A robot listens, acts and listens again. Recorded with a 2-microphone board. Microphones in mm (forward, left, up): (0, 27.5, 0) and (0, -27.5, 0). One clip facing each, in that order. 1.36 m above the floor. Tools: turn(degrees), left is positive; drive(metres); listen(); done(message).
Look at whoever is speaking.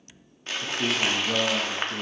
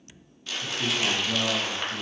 turn(degrees=50)
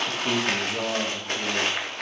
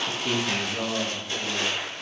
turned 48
turn(degrees=25)
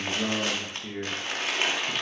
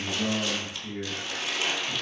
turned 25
turn(degrees=40)
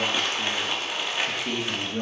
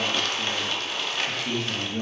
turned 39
turn(degrees=15)
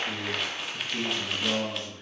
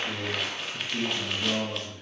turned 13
done("Facing the man speaking, 1 to 2 m away.")